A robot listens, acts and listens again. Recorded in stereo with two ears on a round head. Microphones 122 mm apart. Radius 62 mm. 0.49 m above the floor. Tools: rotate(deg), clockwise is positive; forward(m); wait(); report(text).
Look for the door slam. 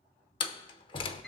rotate(-35)
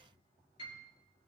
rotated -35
wait()
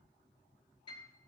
report("I heard a door slam, but can't make it out now. It was about straight ahead or 110° left.")